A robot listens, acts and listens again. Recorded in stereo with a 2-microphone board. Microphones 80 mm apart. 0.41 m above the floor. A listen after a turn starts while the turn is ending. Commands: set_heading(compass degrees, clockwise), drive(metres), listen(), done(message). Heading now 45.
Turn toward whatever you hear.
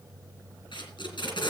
set_heading(315)
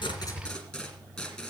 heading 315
done("Found it: tape being pulled, straight ahead, 2 to 4 m away.")